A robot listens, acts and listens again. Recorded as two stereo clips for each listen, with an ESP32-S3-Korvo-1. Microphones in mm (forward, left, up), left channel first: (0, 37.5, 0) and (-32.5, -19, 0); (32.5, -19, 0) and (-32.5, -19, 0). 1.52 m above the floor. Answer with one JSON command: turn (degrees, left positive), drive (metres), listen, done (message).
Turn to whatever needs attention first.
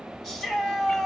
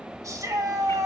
{"turn": 145}
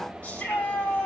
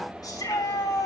{"turn": -10}
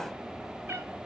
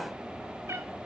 {"listen": true}
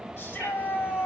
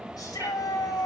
{"done": "Facing the shout."}